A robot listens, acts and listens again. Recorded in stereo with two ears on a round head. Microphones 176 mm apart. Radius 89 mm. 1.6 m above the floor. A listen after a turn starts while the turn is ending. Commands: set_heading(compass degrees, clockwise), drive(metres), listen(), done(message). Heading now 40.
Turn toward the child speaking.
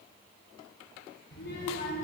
set_heading(340)
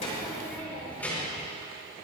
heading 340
set_heading(330)
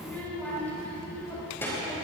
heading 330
set_heading(315)
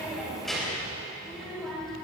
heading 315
done("Found it: a child speaking, straight ahead.")